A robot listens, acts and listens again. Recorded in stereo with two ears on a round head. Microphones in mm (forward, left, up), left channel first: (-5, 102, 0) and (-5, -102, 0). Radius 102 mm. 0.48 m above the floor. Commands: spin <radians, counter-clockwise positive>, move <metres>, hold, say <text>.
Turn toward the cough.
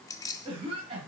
spin -0.44
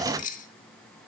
hold
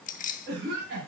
spin -2.27
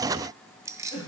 spin 0.44
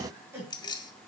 spin -0.17
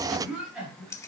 say Found it: a cough, straight ahead, 2 to 4 m away.